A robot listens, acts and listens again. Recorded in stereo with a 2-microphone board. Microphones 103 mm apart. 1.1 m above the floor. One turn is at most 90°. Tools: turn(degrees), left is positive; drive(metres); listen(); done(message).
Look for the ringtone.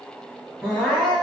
listen()
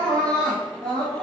listen()
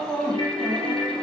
turn(degrees=40)
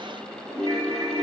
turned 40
turn(degrees=90)
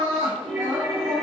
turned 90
done("Found it: a ringtone, straight ahead.")